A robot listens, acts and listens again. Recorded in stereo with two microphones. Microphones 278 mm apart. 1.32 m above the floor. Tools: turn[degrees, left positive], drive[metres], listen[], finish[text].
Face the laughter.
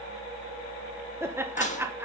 Action: turn[-30]
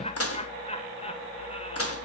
Thought: So it is at 20° left.
Action: turn[20]
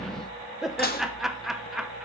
Action: finish[Found it: laughter, straight ahead, 1 to 2 m away.]